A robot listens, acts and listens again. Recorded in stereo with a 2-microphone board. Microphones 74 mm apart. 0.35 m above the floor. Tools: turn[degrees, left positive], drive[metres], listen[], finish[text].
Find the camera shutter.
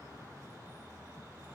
Action: listen[]
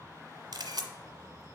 Action: turn[-90]
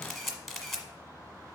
Action: finish[Facing the camera shutter, 1 to 2 m away.]